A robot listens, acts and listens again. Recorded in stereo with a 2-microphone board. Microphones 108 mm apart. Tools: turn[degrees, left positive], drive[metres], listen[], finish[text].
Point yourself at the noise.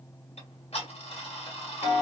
Action: turn[90]
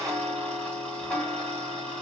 Thought: So it is at 15° left.
Action: turn[15]
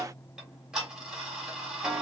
Action: finish[Facing the ticking.]